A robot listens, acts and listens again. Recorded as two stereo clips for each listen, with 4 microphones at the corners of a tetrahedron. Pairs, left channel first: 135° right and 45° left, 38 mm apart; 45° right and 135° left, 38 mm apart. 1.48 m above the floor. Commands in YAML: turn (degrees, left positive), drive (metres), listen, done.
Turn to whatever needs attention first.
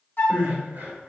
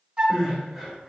turn: 35
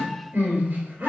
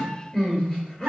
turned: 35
turn: 10
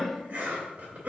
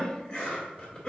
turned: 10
listen: true
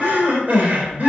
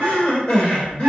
done: "Found it: crying, straight ahead, 2 to 4 m away."